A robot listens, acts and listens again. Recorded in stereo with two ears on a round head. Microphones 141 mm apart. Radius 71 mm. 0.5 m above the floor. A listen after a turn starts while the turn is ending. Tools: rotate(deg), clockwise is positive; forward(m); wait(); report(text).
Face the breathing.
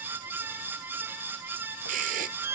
rotate(55)
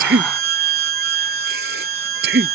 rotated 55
rotate(70)
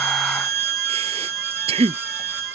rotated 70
rotate(40)
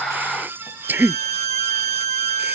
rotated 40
rotate(10)
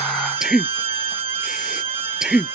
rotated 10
report("Facing the breathing.")